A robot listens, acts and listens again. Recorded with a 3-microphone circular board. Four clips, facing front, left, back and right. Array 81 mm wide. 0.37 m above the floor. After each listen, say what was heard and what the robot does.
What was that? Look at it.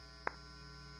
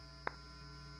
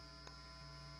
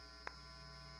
The clap: 35° left. Turn 35° left.
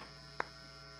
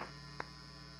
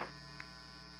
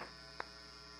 Found it: a clap, straight ahead.